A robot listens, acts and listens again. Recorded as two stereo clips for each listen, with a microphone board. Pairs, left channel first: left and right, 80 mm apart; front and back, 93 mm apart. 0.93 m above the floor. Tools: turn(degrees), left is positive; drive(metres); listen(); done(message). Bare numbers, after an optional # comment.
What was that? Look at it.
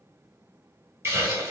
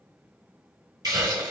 # The hiss: 140° right.
turn(-140)
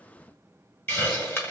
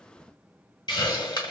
# The hiss is now 30° left.
turn(30)
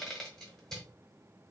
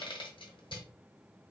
done("Found it: a hiss, straight ahead, 1 to 2 m away.")